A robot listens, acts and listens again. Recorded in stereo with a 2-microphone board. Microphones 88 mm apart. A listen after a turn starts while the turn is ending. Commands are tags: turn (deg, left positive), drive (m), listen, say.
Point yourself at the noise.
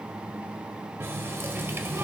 <turn deg="-30"/>
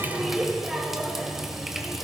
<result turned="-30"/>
<say>Found it: a running tap, straight ahead, under 1 m away.</say>